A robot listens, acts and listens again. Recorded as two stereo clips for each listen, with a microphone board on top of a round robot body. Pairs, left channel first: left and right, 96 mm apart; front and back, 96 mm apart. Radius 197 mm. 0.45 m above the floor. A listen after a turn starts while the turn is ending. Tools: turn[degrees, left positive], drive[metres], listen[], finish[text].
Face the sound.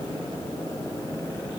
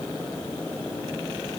Action: listen[]
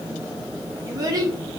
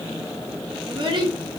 Thought: The child speaking: 140° right.
Action: turn[-140]
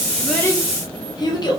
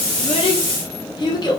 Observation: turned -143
Thought: The child speaking is now 45° left.
Action: turn[45]
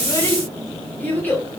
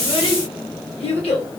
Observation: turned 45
Thought: The child speaking is now 20° left.
Action: turn[20]
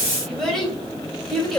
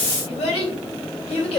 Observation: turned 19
Action: finish[Facing the child speaking.]